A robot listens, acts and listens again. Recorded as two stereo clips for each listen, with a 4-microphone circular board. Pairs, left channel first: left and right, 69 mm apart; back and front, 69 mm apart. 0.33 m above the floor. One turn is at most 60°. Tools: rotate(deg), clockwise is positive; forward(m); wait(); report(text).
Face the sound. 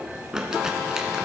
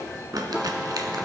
rotate(10)
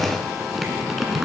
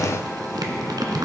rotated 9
report("Found it: crumpling, straight ahead, 1 to 2 m away.")